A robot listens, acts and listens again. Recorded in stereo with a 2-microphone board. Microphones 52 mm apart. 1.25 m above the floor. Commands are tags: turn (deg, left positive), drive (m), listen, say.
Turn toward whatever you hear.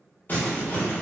<turn deg="35"/>
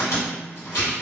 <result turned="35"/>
<turn deg="110"/>
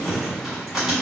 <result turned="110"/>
<say>Facing the crumpling, 1 to 2 m away.</say>